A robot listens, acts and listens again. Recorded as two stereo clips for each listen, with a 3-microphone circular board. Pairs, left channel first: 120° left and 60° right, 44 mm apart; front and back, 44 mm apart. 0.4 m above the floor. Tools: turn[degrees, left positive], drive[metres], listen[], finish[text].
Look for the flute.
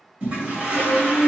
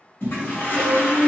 Thought: The flute: 50° left.
Action: turn[50]
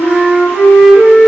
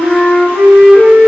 Action: finish[Found it: a flute, straight ahead.]